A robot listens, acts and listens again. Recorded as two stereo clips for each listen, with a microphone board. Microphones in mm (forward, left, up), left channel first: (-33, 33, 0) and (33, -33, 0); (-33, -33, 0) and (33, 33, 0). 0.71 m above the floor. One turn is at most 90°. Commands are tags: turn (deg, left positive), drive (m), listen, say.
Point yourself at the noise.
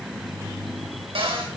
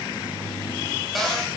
<turn deg="-45"/>
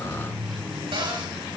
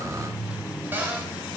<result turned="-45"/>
<turn deg="-25"/>
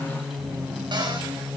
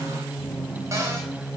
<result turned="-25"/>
<listen/>
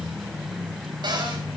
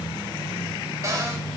<turn deg="-10"/>
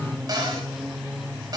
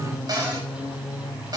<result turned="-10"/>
<say>Facing the cupboard door.</say>